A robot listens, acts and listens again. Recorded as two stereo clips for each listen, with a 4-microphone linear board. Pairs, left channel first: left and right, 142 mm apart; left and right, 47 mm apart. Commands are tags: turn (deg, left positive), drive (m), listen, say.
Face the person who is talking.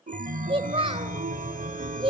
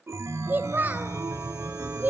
<turn deg="-40"/>
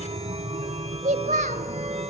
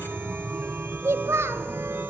<turn deg="-95"/>
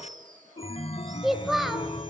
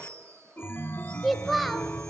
<say>Facing the child speaking.</say>